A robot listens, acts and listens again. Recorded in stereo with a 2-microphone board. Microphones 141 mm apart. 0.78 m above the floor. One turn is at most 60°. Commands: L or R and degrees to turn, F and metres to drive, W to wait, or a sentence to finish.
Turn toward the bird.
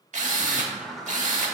L30
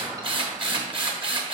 R30
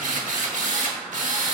W
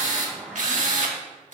Found it: a bird, straight ahead, 1 to 2 m away.